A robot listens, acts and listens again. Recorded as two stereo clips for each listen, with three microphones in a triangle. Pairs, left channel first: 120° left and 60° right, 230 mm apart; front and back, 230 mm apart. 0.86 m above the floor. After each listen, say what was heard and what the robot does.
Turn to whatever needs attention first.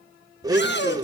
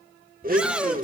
The shout: 95° left. Turn 95° left.
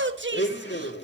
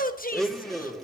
The shout is now 40° right. Turn 40° right.
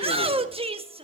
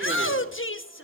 Found it: a shout, straight ahead, 1 to 2 m away.